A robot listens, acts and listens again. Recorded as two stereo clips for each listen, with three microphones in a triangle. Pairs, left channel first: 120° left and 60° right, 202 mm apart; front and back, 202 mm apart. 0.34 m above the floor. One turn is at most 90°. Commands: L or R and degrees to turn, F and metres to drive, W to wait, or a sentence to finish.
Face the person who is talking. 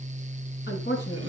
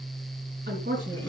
L90
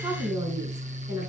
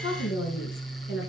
L10
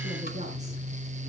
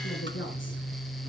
Found it: a woman speaking, straight ahead.